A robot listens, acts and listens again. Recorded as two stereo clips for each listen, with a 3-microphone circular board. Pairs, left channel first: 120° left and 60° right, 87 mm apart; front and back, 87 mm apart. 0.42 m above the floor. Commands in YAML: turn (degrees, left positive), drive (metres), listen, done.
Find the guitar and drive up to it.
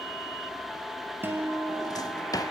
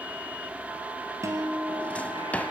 turn: -125
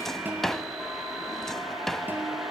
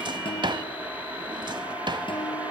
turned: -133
drive: 1.0
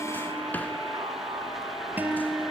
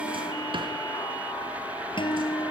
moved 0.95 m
turn: 10
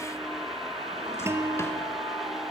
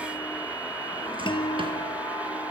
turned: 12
drive: 1.0
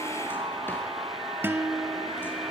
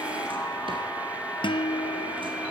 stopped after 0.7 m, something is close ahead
done: "Arrived at the guitar, straight ahead."